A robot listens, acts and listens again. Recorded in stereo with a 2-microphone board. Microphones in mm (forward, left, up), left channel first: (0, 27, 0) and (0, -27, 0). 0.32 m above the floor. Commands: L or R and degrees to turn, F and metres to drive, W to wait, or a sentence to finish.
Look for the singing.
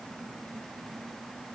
W
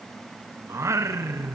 R70
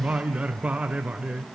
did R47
R25
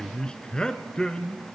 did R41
L15
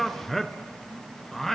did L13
Found it: singing, straight ahead, under 1 m away.